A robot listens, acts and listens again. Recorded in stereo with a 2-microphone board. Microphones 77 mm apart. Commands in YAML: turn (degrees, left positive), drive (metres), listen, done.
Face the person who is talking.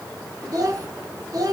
turn: -50
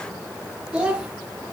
turn: -15
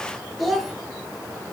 done: "Found it: a child speaking, straight ahead, 1 to 2 m away."